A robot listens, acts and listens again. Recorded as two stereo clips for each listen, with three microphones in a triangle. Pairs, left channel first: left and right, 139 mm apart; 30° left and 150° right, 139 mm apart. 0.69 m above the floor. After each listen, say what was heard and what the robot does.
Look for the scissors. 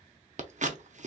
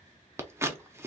The scissors: 80° right. Turn 80° right.
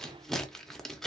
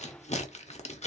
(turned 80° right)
Found it: scissors, straight ahead, under 1 m away.